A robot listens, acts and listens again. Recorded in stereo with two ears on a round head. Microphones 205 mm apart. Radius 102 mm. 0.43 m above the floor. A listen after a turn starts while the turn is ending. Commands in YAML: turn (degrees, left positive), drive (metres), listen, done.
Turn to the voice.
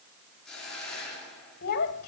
turn: 45
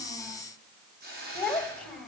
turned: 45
done: "Found it: a child speaking, straight ahead."